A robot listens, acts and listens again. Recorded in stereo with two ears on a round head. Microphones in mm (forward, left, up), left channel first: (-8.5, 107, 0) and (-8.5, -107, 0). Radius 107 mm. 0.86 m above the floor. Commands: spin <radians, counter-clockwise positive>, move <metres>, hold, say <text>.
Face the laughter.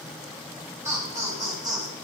spin -0.26
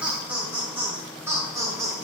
spin -0.26
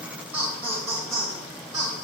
spin -0.35
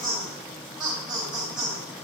spin 0.52
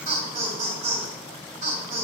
spin -0.61
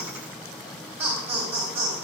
spin -0.17
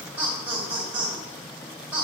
say Facing the laughter, 2 to 4 m away.